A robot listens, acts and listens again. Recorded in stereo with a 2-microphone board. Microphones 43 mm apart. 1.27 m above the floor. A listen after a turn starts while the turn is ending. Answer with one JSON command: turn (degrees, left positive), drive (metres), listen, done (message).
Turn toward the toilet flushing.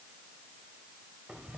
{"listen": true}
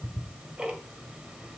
{"listen": true}
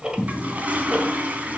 {"turn": -40}
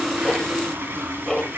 {"turn": -95}
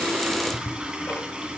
{"turn": -20}
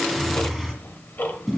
{"done": "Facing the toilet flushing."}